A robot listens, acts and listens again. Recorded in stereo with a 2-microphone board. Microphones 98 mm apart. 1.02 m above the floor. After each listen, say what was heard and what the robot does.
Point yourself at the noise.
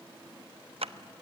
Turn 90° right.
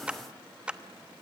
So it is at 10° right. Turn 10° right.
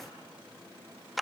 Found it: a clap, straight ahead.